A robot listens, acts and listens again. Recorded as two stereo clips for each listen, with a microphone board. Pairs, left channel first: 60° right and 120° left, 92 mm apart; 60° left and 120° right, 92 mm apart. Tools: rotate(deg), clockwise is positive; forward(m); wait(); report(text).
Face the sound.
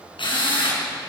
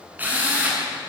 rotate(50)
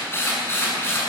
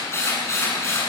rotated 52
report("Found it: a drill, straight ahead.")